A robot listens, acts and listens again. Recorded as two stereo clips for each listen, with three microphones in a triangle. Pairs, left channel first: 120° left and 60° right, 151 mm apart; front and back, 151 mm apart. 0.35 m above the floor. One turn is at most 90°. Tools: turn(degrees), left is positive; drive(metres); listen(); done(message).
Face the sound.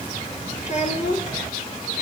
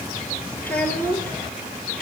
turn(degrees=80)
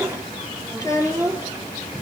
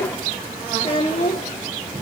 turn(degrees=55)
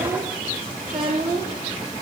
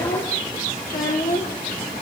turn(degrees=25)
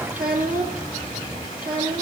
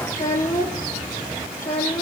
turn(degrees=20)
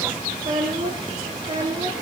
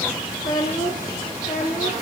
done("Found it: a child speaking, straight ahead, over 4 m away.")